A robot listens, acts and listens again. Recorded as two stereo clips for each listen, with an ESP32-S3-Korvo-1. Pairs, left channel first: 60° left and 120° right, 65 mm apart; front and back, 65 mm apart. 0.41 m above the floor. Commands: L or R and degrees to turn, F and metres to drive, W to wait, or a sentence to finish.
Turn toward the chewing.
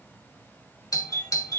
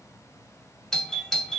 W
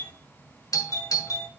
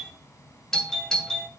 W
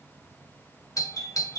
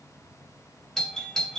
I can't make out chewing, only a doorbell.